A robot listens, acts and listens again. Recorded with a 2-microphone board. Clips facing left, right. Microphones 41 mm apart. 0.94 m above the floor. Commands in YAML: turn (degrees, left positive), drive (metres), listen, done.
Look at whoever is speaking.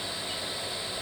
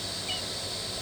listen: true
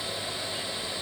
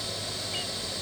listen: true
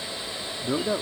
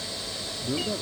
turn: 70
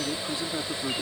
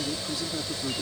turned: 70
turn: 30
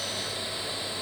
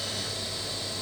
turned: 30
listen: true
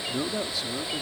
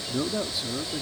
done: "Found it: a man speaking, straight ahead."